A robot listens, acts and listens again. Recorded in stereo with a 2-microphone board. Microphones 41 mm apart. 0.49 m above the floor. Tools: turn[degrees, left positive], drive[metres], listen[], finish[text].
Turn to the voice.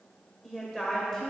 Action: turn[30]
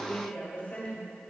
Thought: So it is at 135° left.
Action: turn[135]
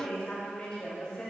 Thought: The woman speaking is now 30° left.
Action: turn[30]
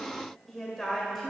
Action: finish[Found it: a woman speaking, straight ahead.]